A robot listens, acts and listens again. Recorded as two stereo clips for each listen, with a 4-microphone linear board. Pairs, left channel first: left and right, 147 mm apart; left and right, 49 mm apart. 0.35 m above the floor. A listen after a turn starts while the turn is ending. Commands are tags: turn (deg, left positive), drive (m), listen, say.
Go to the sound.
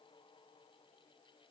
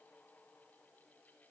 <listen/>
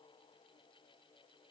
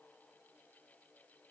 <listen/>
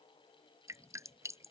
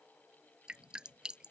<turn deg="-20"/>
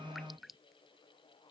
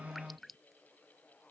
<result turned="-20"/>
<drive m="1.0"/>
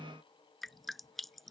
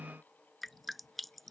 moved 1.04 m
<drive m="1.0"/>
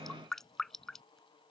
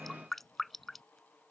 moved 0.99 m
<drive m="1.0"/>
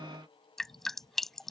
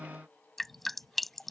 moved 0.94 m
<drive m="1.0"/>
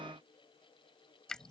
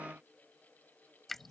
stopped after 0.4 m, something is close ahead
<say>Arrived at the dripping, straight ahead.</say>